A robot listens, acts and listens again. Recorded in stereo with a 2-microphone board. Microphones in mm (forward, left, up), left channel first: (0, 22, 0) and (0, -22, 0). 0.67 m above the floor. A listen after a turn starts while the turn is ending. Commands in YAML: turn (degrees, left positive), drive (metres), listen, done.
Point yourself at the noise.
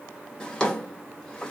turn: 15
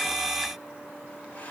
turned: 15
listen: true
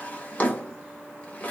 turn: 145
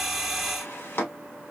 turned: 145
turn: 55
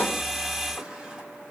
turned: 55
listen: true
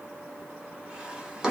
turn: -20
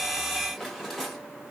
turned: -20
done: "Found it: a drawer, straight ahead, 1 to 2 m away."